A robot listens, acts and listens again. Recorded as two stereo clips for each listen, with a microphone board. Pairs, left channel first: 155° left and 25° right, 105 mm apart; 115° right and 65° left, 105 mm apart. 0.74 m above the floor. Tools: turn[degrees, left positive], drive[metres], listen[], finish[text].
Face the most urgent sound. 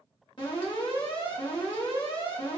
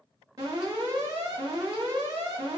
Thought: The alarm: 120° left.
Action: turn[120]
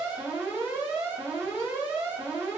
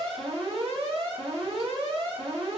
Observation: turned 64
Thought: The alarm is now 55° left.
Action: turn[55]
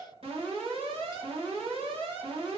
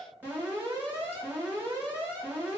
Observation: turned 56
Action: finish[Found it: an alarm, straight ahead.]